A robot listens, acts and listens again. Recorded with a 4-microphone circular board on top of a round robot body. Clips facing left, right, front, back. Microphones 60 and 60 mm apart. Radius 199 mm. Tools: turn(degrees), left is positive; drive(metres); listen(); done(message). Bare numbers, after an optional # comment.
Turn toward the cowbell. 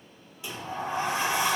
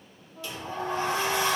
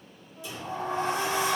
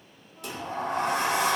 listen()
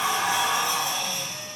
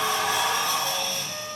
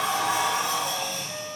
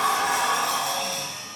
listen()
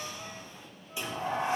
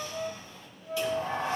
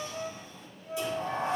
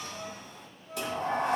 done("I can't make out a cowbell to turn to.")